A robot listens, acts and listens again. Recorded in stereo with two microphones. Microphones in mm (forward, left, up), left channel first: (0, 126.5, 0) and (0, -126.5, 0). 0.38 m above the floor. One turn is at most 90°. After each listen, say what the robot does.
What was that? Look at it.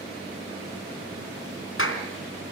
Turn 55° left.
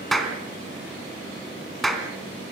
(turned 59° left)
Found it: a clap, straight ahead.